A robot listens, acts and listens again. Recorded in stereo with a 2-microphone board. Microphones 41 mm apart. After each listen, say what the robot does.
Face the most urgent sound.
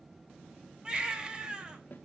Turn 25° right.
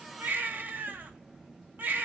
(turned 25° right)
Turn 130° right.
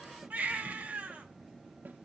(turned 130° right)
Turn 35° right.
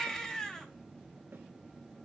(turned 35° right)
Turn 15° left.
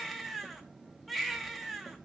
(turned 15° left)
Found it: a baby crying, straight ahead, 1 to 2 m away.